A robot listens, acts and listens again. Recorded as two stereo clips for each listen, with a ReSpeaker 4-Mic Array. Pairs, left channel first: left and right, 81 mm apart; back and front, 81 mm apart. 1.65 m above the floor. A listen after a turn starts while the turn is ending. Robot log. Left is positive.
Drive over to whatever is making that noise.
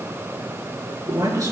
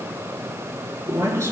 note: The man speaking: 50° right.
cmd yaw -50
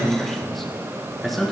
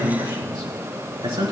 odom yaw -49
cmd fwd 1.0
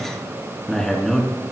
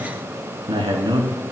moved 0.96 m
cmd fwd 1.0
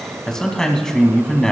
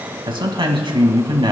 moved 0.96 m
cmd fwd 1.0
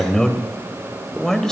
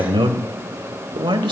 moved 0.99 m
cmd fwd 1.0
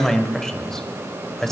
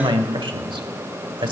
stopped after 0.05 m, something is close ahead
end: I am next to the man speaking.